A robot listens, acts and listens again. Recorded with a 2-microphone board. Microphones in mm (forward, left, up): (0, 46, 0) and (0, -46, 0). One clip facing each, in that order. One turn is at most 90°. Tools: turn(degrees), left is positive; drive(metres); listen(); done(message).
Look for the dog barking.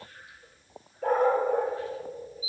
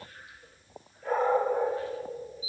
turn(degrees=55)
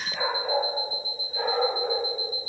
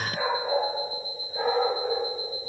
turn(degrees=-20)
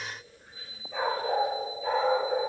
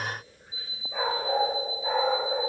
turn(degrees=-10)
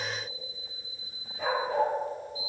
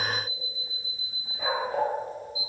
done("Facing the dog barking.")